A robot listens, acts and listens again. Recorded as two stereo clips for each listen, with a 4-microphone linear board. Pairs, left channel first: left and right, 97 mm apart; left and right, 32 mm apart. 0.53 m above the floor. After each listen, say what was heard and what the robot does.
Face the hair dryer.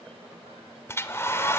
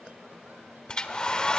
The hair dryer: about 25° left or 155° left. Turn 25° left.
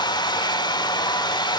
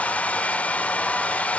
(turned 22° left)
So it is at 130° left. Turn 130° left.
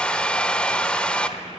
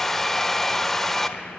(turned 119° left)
The hair dryer is now 10° left. Turn 10° left.
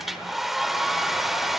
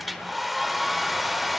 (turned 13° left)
Found it: a hair dryer, straight ahead, 1 to 2 m away.